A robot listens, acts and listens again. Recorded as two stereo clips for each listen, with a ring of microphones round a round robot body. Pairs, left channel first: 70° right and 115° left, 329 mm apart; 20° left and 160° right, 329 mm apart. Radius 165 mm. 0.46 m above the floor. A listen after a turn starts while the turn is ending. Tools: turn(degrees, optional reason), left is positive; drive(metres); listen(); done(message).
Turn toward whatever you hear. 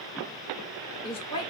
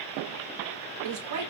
turn(degrees=-140, reason="The woman speaking: 140° right.")
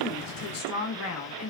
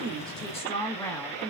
turn(degrees=-65, reason="The woman speaking is now 65° right.")
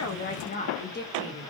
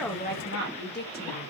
turn(degrees=-25, reason="The woman speaking is now 25° right.")
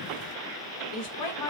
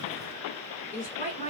turn(degrees=-45, reason="The woman speaking is now 45° right.")
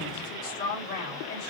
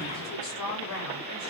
turn(degrees=-10, reason="The woman speaking is now 10° right.")
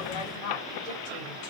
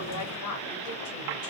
done("Found it: a woman speaking, straight ahead.")